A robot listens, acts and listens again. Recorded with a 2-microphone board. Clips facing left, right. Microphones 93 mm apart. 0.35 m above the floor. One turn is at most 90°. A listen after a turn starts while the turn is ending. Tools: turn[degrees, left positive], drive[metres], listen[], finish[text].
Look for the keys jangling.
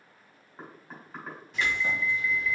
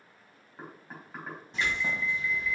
Thought: The keys jangling: about 25° right or 155° right.
Action: turn[-25]
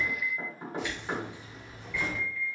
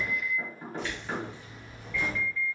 Thought: So it is at 25° left.
Action: turn[25]
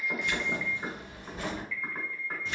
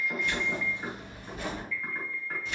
Thought: The keys jangling is now 30° left.
Action: turn[30]
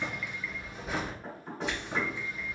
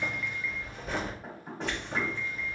Action: finish[Found it: keys jangling, straight ahead.]